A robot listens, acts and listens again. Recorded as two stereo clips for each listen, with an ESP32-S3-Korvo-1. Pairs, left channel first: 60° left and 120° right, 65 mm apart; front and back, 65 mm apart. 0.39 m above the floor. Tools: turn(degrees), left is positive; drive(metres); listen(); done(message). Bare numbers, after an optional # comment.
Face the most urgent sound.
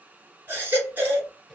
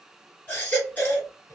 # The baby crying: 60° right.
turn(-60)
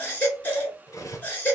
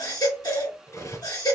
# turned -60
done("Found it: a baby crying, straight ahead, 2 to 4 m away.")